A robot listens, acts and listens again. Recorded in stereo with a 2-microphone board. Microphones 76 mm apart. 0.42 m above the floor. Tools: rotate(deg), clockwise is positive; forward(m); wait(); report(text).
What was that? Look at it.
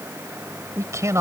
rotate(40)
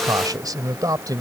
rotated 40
rotate(130)
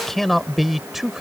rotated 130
report("Found it: a man speaking, straight ahead.")